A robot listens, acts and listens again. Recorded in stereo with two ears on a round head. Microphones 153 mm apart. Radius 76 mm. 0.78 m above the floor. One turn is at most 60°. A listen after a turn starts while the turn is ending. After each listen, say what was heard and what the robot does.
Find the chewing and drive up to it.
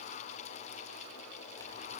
Keep listening.
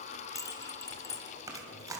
The chewing: about 20° right or 160° right. Turn 20° right.
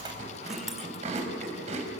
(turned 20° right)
So it is at 140° right. Turn 60° right.
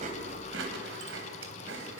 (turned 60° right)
The chewing is now 90° right. Turn 60° right.
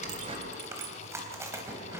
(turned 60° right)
The chewing is now 15° right. Turn 15° right.
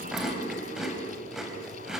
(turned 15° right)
Drive 1.0 m forward.
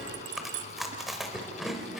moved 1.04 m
Drive 1.0 m forward.
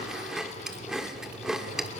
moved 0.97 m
Drive 1.0 m forward.
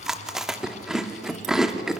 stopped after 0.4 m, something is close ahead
Arrived at the chewing, straight ahead.